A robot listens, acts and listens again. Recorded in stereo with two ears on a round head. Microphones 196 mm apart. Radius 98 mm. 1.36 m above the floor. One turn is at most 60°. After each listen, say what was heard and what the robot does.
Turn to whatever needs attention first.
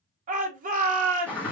The shout: about 40° right or 140° right. Turn 40° right.
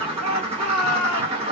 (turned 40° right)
So it is at 100° right. Turn 60° right.
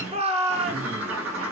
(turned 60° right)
The shout is now 30° right. Turn 30° right.
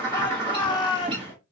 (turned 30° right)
The shout is now 20° left. Turn 20° left.
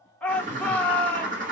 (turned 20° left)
Found it: a shout, straight ahead.